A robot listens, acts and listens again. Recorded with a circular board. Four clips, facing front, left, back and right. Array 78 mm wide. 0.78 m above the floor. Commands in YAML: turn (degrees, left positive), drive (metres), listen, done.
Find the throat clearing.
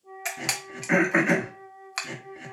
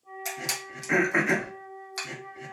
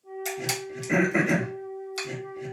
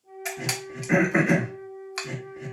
turn: 15
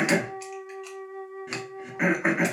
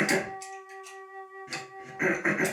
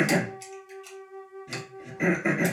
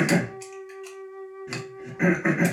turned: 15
done: "Facing the throat clearing, 1 to 2 m away."